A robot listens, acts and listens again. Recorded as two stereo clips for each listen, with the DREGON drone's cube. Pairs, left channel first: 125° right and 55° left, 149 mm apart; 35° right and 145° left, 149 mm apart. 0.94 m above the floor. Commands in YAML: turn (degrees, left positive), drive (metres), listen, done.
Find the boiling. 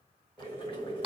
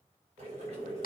turn: -175
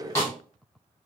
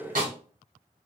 turn: 15
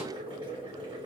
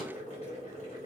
done: "Found it: boiling, straight ahead."